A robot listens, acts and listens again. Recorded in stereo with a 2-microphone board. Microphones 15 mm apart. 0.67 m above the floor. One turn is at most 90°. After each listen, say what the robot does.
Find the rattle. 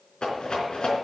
Turn 65° left.
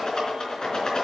Turn 45° left.
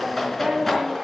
Turn 15° left.
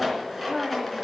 Found it: a rattle, straight ahead, 2 to 4 m away.